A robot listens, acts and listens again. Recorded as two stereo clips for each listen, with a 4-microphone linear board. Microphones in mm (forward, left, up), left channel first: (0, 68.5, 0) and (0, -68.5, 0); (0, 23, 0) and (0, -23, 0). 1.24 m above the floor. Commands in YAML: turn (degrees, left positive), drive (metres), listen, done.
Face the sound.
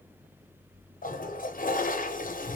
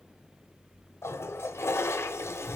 turn: 75
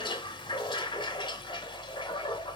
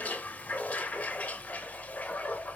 turn: 30
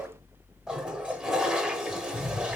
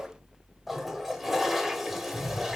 done: "Found it: a toilet flushing, straight ahead."